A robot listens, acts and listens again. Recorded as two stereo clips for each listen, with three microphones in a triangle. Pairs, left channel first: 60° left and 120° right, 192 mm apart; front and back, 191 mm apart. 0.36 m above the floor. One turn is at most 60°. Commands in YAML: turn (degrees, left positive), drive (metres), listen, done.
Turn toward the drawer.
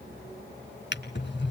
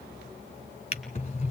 turn: 55
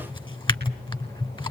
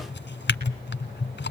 done: "Found it: a drawer, straight ahead, 1 to 2 m away."